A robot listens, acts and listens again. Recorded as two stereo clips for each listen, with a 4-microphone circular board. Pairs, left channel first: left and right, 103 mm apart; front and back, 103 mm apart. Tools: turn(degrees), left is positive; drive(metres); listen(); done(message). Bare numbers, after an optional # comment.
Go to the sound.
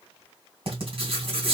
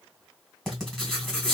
# The writing: 85° right.
turn(-85)
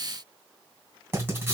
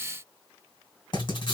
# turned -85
# The writing is now 25° right.
turn(-25)
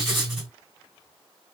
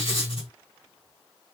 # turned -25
drive(1.0)
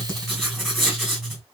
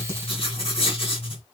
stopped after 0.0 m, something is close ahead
done("Blocked. The writing is further on, straight ahead.")